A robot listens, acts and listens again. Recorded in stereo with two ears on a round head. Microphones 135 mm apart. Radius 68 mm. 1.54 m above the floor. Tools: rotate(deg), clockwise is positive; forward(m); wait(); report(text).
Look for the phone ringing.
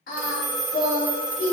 rotate(55)
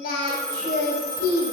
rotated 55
rotate(25)
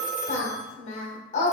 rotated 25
report("Found it: a phone ringing, straight ahead, under 1 m away.")